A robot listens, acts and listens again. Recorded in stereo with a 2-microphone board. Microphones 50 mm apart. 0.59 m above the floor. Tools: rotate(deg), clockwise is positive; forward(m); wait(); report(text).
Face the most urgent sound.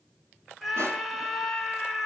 rotate(30)
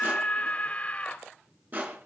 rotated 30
rotate(-25)
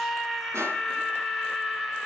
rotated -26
report("Found it: a scream, straight ahead.")